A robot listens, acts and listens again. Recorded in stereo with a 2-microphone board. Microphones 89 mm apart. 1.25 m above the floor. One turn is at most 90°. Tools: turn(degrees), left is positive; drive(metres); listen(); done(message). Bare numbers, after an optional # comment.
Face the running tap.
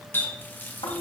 # The running tap: about 20° left or 160° left.
turn(20)
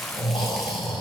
listen()
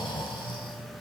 listen()
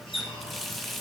done("Found it: a running tap, straight ahead.")